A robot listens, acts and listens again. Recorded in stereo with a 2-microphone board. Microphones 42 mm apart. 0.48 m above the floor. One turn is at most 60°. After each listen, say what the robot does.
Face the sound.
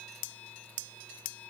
Keep listening.
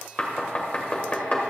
Turn 35° left.
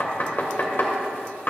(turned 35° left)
Turn 60° left.
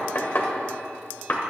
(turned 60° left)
Turn 60° left.
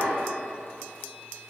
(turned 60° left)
Turn 15° left.
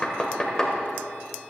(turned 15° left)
Turn 15° left.
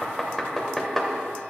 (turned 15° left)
Facing the knocking, 2 to 4 m away.